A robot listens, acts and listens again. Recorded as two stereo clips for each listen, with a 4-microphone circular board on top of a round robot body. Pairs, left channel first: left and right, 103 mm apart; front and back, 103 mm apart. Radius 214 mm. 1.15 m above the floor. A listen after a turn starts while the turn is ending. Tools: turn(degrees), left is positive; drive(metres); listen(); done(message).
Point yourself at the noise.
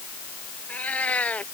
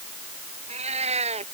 turn(degrees=170)
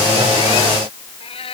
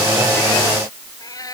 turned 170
turn(degrees=60)
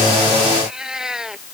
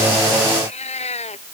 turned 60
done("Found it: a cat meowing, straight ahead.")